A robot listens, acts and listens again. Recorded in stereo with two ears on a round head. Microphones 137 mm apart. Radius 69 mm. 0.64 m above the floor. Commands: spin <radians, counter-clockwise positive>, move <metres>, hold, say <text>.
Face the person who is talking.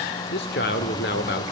spin 1.22
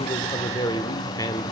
spin 0.44
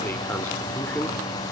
spin 0.17
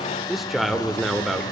say Found it: a man speaking, straight ahead.